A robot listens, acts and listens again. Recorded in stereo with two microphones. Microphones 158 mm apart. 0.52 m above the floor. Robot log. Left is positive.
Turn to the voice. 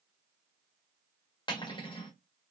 cmd idle
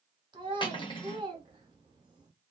note: The child speaking: about 30° right or 150° right.
cmd yaw -30
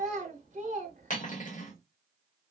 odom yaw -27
note: So it is at 120° right.
cmd yaw -120
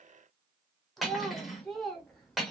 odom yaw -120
end: Facing the child speaking, under 1 m away.